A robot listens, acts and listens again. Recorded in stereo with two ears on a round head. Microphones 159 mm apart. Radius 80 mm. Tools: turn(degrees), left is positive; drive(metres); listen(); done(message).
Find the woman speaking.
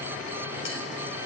listen()
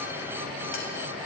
listen()
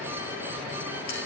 done("I can't make out a woman speaking.")